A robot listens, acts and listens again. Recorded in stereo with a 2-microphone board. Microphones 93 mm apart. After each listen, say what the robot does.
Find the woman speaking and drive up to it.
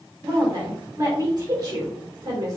Turn 40° right.
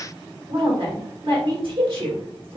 Turn 90° right.
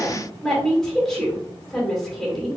Drive 1.0 m forward.
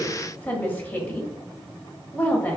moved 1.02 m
Turn 30° left.
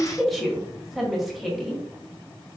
Drive 1.0 m forward.
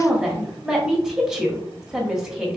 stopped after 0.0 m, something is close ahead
Turn 10° right.
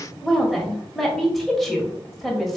I am next to the woman speaking.